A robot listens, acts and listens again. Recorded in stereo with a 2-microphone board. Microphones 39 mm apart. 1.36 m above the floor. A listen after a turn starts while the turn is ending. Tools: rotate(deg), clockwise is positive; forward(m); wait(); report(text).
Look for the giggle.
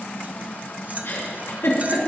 rotate(-65)
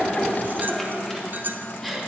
report("Found it: a giggle, straight ahead.")